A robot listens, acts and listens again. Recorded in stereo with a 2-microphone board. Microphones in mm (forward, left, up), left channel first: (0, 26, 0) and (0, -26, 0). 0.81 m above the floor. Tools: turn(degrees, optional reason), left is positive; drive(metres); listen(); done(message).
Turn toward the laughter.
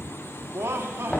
turn(degrees=-50, reason="The laughter: about 50° right or 130° right.")
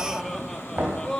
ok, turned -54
turn(degrees=15, reason="So it is at 15° left.")
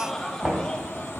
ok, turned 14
turn(degrees=15, reason="The laughter is now 15° left.")
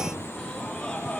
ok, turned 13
turn(degrees=20, reason="The laughter is now 20° left.")
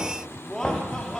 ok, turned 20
turn(degrees=15, reason="The laughter is now 15° left.")
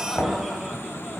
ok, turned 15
listen()
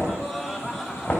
done("Facing the laughter, 2 to 4 m away.")